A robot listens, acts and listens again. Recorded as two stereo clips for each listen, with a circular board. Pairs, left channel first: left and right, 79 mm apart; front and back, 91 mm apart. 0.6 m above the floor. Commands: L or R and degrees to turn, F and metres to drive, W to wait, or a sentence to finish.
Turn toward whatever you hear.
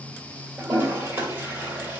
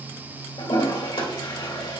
R20
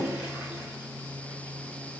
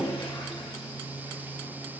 R10
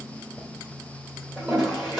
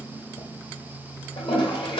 Facing the toilet flushing, 2 to 4 m away.